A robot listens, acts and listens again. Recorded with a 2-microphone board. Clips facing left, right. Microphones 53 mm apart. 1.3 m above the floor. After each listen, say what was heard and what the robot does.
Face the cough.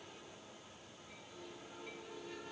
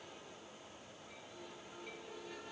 Keep listening.
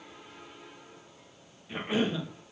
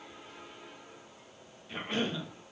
Turn 30° left.
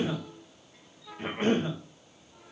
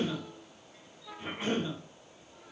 So it is at 140° left. Turn 140° left.
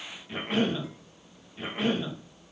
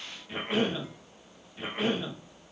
Found it: a cough, straight ahead.